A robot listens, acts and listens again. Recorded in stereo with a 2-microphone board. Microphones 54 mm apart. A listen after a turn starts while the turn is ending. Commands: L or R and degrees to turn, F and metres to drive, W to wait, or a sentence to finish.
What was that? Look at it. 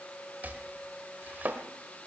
R35
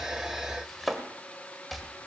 Found it: chopping, straight ahead.